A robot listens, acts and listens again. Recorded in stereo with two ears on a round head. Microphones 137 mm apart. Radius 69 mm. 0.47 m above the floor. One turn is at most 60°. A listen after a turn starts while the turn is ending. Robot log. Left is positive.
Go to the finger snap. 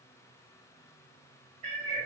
cmd idle
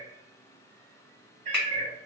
cmd yaw -30
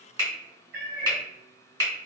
note: So it is at 145° right.
cmd yaw -60
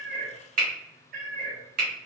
note: The finger snap is now 90° right.
cmd yaw -60
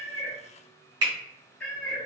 note: The finger snap is now 30° right.
cmd yaw -30
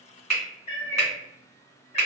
cmd fwd 1.0
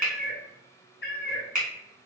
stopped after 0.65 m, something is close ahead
end: I am next to the finger snap.